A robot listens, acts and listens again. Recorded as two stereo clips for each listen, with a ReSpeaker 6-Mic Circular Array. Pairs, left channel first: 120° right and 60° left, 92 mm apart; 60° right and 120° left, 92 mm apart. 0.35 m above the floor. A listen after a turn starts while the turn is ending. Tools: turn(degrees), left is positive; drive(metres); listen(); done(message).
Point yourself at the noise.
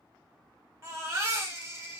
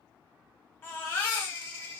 done("Facing the baby crying, under 1 m away.")